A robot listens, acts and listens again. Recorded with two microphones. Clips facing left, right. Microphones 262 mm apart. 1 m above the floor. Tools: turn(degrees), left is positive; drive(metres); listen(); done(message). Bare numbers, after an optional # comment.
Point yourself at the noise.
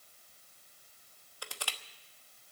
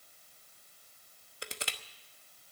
# The crushing: about 20° right or 160° right.
turn(-20)
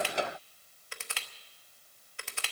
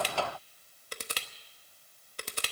# So it is at 140° right.
turn(-140)
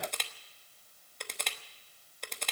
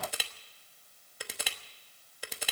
done("Facing the crushing, 1 to 2 m away.")